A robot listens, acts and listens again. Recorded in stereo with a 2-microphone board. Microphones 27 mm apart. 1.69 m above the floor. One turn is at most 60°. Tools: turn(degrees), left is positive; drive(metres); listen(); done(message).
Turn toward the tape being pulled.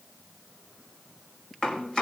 listen()
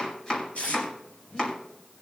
turn(degrees=55)
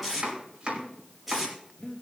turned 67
done("Facing the tape being pulled, over 4 m away.")